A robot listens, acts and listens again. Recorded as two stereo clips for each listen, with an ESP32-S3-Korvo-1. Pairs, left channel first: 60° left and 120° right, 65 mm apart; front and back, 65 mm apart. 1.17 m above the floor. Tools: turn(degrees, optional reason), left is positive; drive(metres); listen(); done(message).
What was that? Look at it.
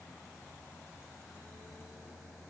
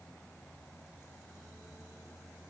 listen()
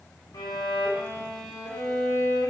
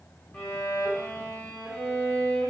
turn(degrees=65, reason="The violin: 65° left.")
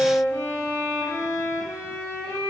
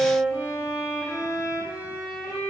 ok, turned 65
turn(degrees=15, reason="The violin is now 15° left.")
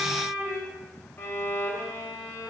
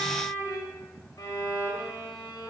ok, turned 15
done("Found it: a violin, straight ahead, 1 to 2 m away.")